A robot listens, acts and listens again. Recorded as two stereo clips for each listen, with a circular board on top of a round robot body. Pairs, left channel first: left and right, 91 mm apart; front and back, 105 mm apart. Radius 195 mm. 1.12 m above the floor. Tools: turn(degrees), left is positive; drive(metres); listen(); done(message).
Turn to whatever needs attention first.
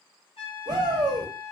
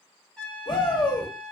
turn(degrees=-50)
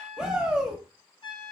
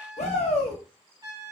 turn(degrees=-10)
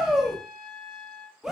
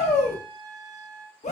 done("Found it: a shout, straight ahead, under 1 m away.")